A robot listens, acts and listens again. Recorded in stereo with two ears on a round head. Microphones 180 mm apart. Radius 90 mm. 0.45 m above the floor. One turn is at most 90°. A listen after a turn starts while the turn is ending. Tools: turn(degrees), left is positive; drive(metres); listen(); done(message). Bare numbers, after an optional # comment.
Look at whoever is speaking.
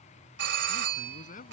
# The man speaking: about 40° left or 140° left.
turn(40)
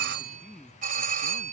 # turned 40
done("Facing the man speaking.")